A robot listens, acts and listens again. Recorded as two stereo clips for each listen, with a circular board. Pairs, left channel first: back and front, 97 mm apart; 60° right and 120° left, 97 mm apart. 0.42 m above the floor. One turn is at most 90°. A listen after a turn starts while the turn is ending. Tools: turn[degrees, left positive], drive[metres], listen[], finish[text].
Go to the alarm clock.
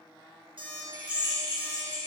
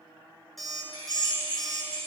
Thought: The alarm clock: 30° left.
Action: turn[30]
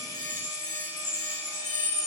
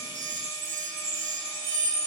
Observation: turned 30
Action: listen[]
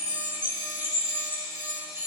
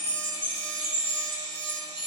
Action: listen[]
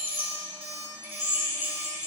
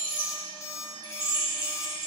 Action: drive[1.0]
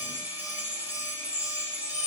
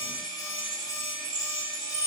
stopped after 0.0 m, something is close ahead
Action: listen[]
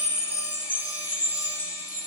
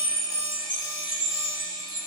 Action: listen[]
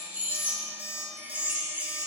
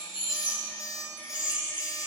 Action: finish[Something is in my way. I am facing the alarm clock but have not reached it.]